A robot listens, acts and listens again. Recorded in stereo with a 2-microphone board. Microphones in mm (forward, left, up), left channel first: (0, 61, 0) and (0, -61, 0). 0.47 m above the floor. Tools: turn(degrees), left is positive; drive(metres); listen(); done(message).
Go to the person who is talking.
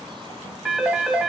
listen()
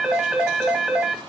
listen()
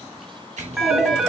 turn(degrees=-60)
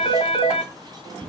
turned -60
drive(metres=1.0)
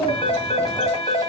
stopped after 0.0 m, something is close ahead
done("Something is in my way. I am facing the child speaking but have not reached it.")